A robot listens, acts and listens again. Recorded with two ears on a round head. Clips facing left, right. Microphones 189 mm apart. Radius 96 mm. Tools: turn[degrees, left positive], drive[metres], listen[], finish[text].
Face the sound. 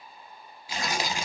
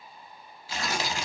Action: turn[30]
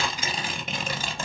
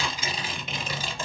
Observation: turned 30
Thought: So it is at 135° left.
Action: turn[135]
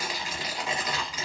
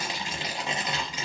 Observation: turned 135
Thought: The tearing paper is now 20° right.
Action: turn[-20]
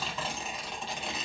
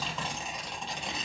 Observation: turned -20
Action: finish[Found it: tearing paper, straight ahead.]